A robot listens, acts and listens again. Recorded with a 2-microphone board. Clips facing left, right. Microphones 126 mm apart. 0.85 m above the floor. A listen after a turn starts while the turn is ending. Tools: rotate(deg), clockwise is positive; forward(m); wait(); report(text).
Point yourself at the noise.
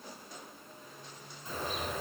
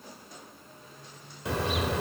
rotate(90)
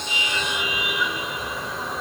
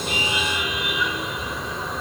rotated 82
report("Facing the car horn.")